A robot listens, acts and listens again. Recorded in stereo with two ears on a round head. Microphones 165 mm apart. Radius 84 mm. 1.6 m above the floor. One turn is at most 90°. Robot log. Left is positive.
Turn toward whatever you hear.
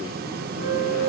note: The flute: about 20° right or 160° right.
cmd yaw -20
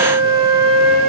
end: Found it: a flute, straight ahead.